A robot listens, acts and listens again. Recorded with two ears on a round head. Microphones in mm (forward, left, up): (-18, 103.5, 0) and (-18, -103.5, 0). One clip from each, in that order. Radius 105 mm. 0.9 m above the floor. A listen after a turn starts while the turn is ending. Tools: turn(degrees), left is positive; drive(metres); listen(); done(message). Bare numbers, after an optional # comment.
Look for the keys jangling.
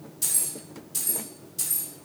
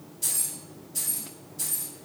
# The keys jangling: about 65° left or 115° left.
turn(65)
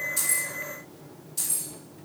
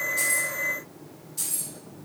# So it is at 15° left.
turn(15)
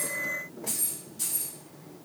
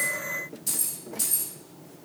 # The keys jangling is now 25° right.
turn(-25)
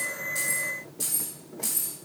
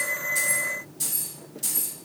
done("Found it: keys jangling, straight ahead.")